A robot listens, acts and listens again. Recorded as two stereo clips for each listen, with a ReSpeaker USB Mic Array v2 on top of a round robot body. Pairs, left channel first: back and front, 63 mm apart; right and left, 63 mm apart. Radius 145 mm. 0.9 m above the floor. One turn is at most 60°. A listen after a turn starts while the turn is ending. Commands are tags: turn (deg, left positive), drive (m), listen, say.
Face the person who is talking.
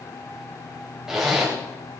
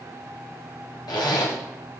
<listen/>
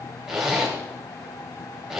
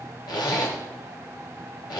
<listen/>
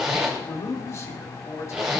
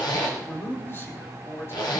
<turn deg="-60"/>
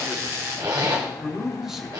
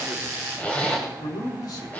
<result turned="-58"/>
<turn deg="-60"/>
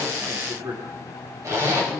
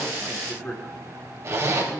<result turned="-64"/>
<turn deg="-20"/>
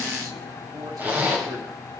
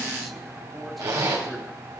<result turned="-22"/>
<listen/>
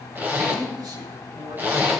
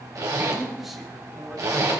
<say>Found it: a man speaking, straight ahead, 2 to 4 m away.</say>